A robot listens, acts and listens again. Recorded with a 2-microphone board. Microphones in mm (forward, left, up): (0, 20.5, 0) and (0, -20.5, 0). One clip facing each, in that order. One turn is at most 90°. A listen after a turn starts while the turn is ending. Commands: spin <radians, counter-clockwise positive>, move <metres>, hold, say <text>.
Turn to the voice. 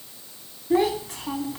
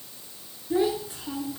spin 1.13
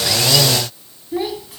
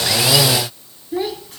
say Facing the child speaking, 2 to 4 m away.